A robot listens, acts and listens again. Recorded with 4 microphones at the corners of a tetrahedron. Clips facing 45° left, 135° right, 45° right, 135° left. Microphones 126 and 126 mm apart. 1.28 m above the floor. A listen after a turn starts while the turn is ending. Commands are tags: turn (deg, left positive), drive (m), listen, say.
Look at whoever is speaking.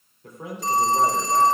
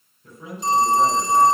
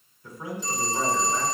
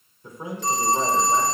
<turn deg="70"/>
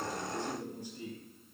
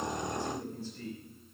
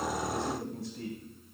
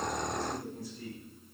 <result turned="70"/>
<turn deg="-30"/>
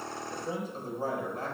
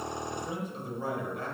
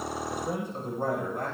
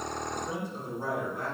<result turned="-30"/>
<say>Found it: a man speaking, straight ahead.</say>